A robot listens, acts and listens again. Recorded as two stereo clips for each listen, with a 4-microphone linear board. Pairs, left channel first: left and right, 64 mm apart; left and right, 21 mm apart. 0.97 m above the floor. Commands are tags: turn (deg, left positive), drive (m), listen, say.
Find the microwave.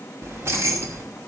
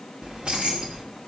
<listen/>
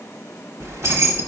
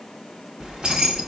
<listen/>
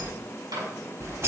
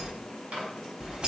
<turn deg="-90"/>
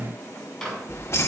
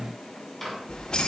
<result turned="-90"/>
<say>Facing the microwave, over 4 m away.</say>